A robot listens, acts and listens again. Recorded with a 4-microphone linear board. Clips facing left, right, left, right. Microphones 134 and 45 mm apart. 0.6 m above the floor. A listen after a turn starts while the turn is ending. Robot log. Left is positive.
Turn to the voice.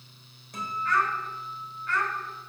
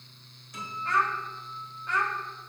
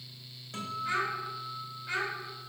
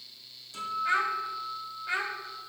note: The child speaking: about 15° right or 165° right.
cmd yaw -15
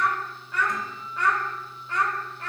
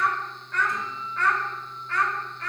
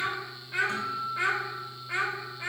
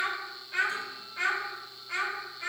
note: So it is at 25° left.
cmd yaw +25
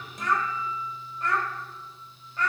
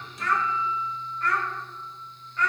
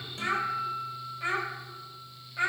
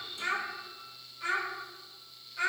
note: The child speaking is now 30° left.
cmd yaw +30
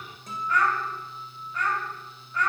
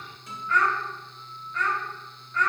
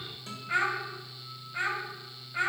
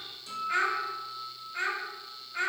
note: The child speaking is now 15° left.
cmd yaw +15
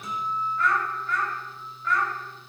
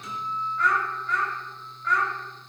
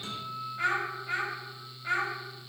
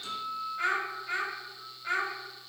end: Found it: a child speaking, straight ahead.